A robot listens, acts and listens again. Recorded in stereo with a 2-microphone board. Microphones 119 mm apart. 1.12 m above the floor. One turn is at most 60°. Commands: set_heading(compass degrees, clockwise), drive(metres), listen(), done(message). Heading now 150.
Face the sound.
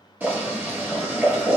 set_heading(165)
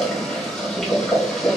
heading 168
done("Found it: boiling, straight ahead, 1 to 2 m away.")